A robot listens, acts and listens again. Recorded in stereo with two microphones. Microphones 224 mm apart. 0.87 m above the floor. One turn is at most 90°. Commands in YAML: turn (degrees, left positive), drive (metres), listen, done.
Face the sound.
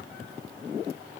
listen: true
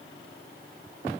listen: true
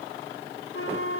turn: 90
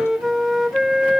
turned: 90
done: "Found it: a flute, straight ahead."